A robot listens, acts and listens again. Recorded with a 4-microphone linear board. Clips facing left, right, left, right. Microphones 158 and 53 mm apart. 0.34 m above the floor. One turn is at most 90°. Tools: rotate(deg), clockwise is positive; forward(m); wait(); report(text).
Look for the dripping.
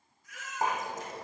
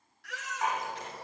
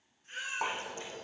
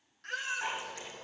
rotate(-45)
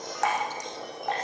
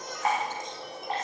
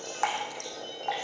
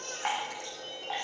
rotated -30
rotate(-90)
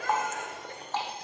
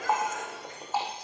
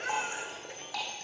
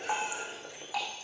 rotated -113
rotate(10)
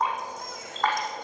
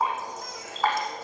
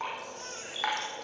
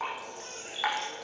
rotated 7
report("Found it: dripping, straight ahead.")